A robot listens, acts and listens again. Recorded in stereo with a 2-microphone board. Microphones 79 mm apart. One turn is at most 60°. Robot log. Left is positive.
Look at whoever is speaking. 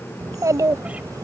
note: The child speaking: about 45° right or 135° right.
cmd yaw -45
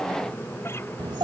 note: So it is at 85° right.
cmd yaw -60
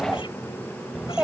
note: The child speaking is now 10° right.
cmd yaw -10
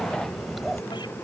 end: Facing the child speaking.